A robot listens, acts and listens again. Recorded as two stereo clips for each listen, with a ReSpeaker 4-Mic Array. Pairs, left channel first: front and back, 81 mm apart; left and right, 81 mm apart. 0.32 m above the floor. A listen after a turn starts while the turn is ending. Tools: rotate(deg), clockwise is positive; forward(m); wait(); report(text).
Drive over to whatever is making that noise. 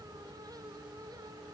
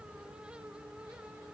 wait()
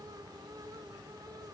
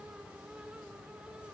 wait()
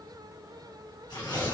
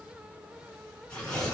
rotate(-10)
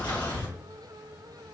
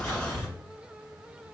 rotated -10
forward(1.0)
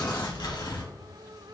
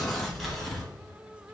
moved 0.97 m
forward(1.0)
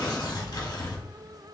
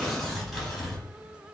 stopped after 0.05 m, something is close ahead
report("I am next to the tearing paper.")